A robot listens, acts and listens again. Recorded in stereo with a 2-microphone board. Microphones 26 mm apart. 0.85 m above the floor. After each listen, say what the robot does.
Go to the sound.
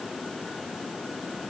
Keep listening.
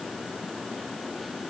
Keep listening.
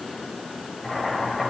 Turn 30° left.
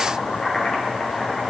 Turn 145° left.
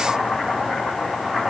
Turn 15° left.
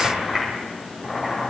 Drive 1.0 m forward.
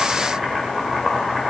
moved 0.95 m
Drive 1.0 m forward.
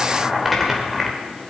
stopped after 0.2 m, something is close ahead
Something is in my way. I am facing the boiling but have not reached it.